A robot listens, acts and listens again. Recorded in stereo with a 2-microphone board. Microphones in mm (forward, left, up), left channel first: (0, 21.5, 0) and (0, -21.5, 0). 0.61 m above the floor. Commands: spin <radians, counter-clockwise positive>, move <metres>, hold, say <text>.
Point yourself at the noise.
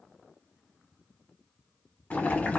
spin 0.70
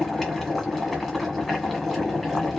say Facing the boiling, 1 to 2 m away.